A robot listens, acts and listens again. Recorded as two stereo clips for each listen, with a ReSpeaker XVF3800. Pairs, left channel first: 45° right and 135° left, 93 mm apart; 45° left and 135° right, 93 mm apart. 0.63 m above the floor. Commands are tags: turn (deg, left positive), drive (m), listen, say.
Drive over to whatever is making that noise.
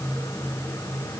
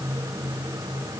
<listen/>
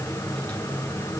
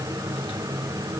<listen/>
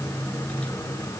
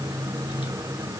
<say>I can't make out anything to turn to.</say>